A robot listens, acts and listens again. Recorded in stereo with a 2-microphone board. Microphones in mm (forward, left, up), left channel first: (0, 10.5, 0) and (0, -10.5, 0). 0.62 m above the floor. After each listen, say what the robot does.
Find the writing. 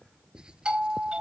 Turn 45° right.
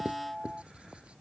Turn 90° right.
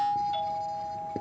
Keep listening.
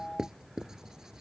Turn 35° right.
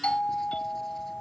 Keep listening.
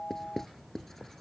Turn 15° left.
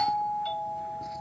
Keep listening.
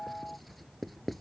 Found it: writing, straight ahead.